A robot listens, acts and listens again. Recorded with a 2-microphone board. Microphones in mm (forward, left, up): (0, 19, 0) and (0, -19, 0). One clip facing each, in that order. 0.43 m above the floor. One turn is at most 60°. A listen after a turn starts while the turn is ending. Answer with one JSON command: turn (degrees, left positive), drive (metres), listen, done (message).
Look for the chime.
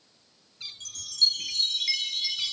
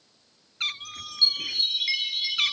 {"turn": -20}
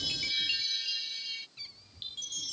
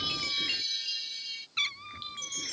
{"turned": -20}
{"done": "Facing the chime."}